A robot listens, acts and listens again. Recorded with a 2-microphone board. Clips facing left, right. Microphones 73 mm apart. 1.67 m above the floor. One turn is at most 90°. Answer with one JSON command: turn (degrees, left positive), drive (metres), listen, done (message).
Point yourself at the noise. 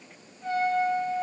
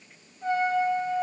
{"turn": -40}
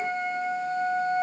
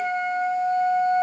{"turn": -90}
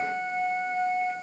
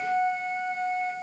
{"done": "Found it: a trumpet, straight ahead."}